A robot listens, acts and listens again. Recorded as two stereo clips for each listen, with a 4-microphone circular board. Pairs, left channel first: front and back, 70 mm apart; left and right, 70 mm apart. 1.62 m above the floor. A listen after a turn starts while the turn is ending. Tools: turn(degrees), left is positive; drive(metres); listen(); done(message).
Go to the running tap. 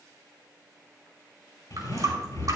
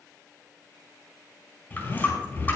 turn(degrees=150)
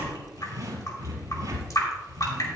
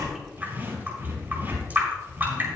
turn(degrees=-30)
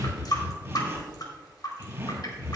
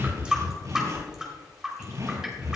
turn(degrees=-10)
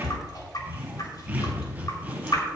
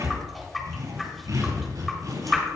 drive(metres=1.0)
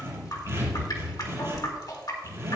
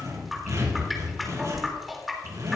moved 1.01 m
drive(metres=1.0)
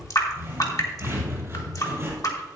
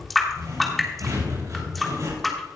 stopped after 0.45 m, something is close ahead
done("Arrived at the running tap, straight ahead.")